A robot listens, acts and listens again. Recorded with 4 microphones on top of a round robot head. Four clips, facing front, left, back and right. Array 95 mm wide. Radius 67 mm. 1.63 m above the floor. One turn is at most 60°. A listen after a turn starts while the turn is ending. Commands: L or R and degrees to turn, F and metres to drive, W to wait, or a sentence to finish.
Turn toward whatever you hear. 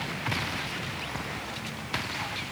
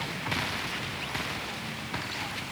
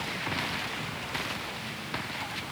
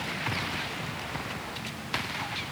W
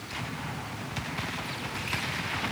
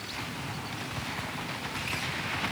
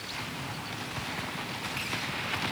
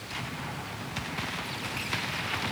W
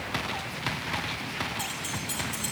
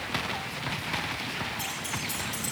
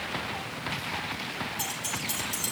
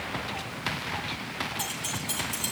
R60
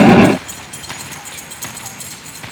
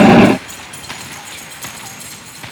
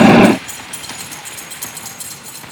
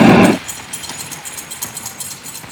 R60
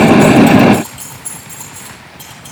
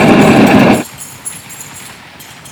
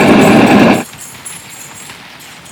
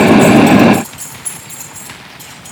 R25
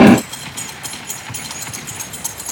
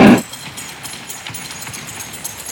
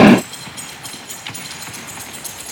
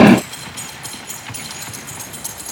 R10
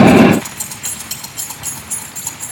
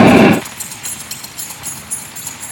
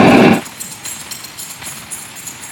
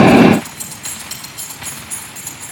Found it: keys jangling, straight ahead, over 4 m away.